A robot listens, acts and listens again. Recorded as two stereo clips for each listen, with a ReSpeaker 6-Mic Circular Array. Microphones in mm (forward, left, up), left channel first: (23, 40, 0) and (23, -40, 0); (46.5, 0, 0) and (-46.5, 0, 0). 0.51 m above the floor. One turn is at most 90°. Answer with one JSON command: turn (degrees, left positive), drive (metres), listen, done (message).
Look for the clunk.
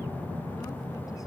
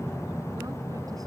{"listen": true}
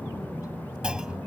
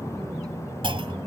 {"turn": -90}
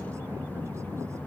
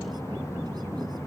{"turn": -75}
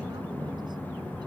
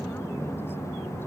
{"done": "I heard a clunk from this way, but can't make it out now."}